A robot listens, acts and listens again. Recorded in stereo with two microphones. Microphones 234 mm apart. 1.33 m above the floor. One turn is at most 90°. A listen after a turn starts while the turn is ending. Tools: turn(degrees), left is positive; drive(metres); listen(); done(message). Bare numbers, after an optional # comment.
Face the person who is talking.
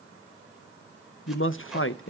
# The man speaking: about 60° left or 120° left.
turn(60)
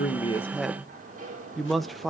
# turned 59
done("Facing the man speaking, 1 to 2 m away.")